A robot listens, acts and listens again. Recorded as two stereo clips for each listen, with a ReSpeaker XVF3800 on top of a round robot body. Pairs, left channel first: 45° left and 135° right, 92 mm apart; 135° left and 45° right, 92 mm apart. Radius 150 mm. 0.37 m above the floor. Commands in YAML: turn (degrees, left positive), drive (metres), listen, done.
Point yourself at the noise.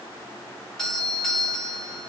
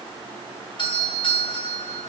turn: 130
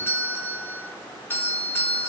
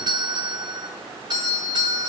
turn: -20
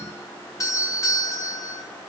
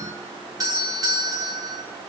done: "Found it: a doorbell, straight ahead, 2 to 4 m away."